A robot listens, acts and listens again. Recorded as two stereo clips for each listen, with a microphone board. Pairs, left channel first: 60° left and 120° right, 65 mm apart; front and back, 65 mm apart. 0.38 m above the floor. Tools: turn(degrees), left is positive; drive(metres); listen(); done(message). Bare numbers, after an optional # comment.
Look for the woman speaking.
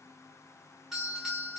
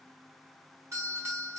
listen()
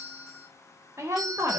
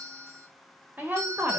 # The woman speaking: 135° right.
turn(-135)
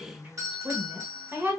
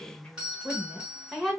# The woman speaking is now 95° right.
turn(-95)
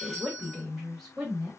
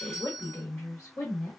# The woman speaking is now 30° right.
turn(-30)
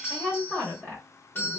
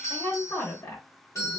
done("Facing the woman speaking, 1 to 2 m away.")